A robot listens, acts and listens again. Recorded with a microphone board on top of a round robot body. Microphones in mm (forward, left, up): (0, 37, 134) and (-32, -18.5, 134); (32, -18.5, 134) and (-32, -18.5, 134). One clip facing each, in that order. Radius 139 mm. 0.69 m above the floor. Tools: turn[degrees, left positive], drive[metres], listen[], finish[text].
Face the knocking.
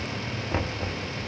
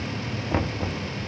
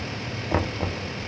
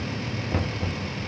Thought: The knocking: 45° right.
Action: turn[-45]
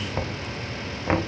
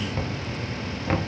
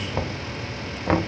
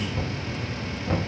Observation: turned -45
Action: finish[Found it: knocking, straight ahead.]